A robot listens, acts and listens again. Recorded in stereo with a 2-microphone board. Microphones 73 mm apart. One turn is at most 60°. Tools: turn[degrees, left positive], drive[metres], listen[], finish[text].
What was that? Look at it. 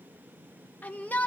Thought: The shout: about 25° left or 155° left.
Action: turn[25]
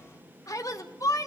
Thought: So it is at 130° left.
Action: turn[60]
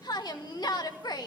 Thought: The shout is now 70° left.
Action: turn[60]
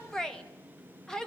Action: finish[Found it: a shout, straight ahead.]